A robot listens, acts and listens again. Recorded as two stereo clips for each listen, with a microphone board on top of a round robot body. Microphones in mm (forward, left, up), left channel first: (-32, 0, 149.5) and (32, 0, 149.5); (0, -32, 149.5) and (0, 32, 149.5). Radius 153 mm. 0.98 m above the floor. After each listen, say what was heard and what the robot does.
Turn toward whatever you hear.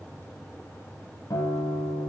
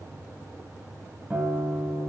The guitar: 155° left. Turn 155° left.
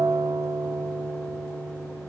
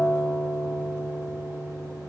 The guitar is now 15° right. Turn 15° right.
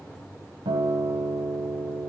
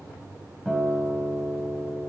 Facing the guitar.